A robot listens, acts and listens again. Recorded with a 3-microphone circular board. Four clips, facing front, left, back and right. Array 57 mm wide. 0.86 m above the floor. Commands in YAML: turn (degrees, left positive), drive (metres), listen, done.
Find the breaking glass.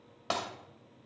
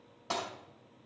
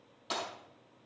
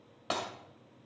turn: -35
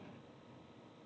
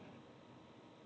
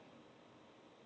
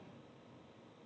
done: "Facing where the breaking glass came from. I can't hear it now."